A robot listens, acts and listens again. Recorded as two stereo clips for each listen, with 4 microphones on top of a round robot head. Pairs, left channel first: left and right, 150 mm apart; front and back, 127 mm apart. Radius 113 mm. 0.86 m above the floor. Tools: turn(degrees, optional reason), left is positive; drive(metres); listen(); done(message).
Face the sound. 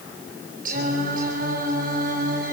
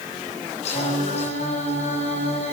turn(degrees=-50, reason="The singing: 50° right.")
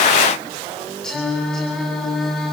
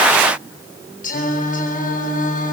done("Facing the singing, over 4 m away.")